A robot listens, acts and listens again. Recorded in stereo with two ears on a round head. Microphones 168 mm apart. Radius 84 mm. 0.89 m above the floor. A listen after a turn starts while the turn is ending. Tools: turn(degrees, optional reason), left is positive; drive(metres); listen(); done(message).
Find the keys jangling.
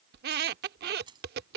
turn(degrees=-25, reason="The keys jangling: about 25° right or 155° right.")
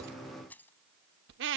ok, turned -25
turn(degrees=10, reason="So it is at 10° left.")
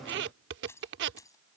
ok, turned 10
turn(degrees=20, reason="The keys jangling is now 20° left.")
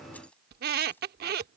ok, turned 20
listen()
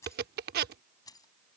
turn(degrees=20, reason="The keys jangling is now 20° left.")
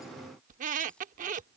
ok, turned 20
listen()
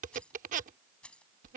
done("Facing the keys jangling.")